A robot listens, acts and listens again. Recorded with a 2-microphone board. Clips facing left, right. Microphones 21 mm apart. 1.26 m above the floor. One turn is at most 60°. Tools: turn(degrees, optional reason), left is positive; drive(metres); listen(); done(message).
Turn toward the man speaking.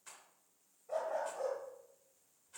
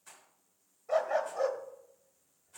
listen()
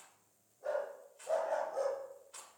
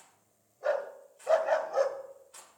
listen()
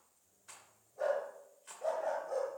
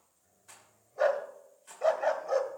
done("I can't make out a man speaking to turn to.")